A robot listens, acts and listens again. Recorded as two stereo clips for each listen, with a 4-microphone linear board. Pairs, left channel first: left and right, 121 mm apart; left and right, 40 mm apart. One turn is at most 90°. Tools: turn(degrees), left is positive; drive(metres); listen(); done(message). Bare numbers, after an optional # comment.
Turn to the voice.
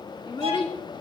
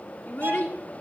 # The child speaking: about 45° left or 135° left.
turn(45)
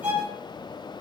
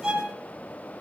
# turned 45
listen()
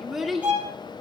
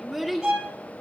done("Found it: a child speaking, straight ahead.")